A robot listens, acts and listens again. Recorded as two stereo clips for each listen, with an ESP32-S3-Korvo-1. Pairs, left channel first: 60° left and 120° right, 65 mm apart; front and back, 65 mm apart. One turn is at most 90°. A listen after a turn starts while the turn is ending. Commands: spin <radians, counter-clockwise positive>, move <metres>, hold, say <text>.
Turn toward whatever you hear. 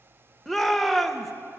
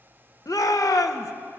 spin -0.52
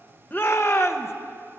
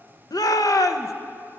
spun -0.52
spin 0.26
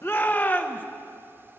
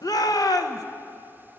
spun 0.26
say Facing the shout.